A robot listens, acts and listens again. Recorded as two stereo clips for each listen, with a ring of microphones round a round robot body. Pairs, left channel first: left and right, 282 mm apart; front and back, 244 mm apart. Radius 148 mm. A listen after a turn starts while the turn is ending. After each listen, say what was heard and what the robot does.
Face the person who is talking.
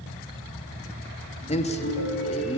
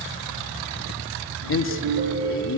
The man speaking: 25° left. Turn 25° left.
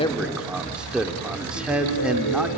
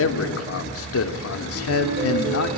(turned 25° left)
Facing the man speaking, 1 to 2 m away.